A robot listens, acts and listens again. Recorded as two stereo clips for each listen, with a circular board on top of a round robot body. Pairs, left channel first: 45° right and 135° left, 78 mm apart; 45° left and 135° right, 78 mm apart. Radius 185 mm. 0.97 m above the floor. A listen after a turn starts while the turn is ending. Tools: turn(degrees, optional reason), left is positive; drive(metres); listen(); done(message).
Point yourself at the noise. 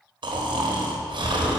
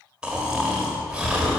turn(degrees=145, reason="The snoring: 145° left.")
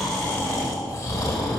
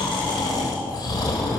done("Facing the snoring, 1 to 2 m away.")